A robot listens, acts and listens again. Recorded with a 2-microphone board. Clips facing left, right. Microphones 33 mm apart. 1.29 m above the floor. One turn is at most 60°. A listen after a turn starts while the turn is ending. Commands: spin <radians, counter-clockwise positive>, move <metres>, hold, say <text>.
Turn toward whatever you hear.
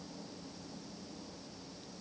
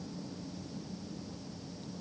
hold
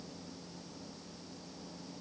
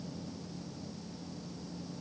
hold
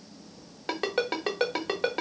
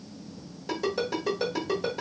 spin 0.96
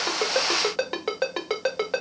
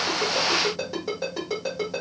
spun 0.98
spin 1.05
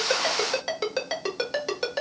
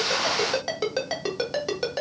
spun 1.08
say Facing the ringtone, 1 to 2 m away.